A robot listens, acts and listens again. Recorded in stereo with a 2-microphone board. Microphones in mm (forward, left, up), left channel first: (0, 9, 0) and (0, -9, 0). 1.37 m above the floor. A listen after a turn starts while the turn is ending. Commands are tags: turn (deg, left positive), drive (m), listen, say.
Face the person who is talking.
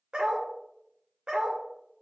<listen/>
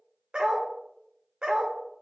<listen/>
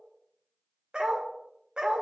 <say>I can't make out anyone speaking, only a dog barking.</say>